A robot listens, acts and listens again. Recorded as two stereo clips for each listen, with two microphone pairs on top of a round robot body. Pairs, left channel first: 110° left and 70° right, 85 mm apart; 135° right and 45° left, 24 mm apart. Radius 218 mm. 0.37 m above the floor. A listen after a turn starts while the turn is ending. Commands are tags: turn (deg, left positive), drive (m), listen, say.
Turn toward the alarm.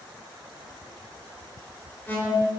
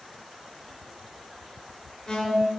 <turn deg="170"/>
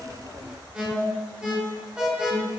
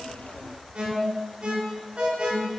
<say>Facing the alarm, 2 to 4 m away.</say>